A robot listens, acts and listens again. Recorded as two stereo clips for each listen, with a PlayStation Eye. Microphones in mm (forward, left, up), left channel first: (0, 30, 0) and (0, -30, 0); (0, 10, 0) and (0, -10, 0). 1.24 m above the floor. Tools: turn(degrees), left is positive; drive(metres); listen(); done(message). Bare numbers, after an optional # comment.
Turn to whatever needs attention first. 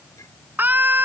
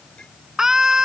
# The scream: about 30° right or 150° right.
turn(-30)
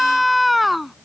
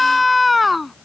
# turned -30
done("Found it: a scream, straight ahead.")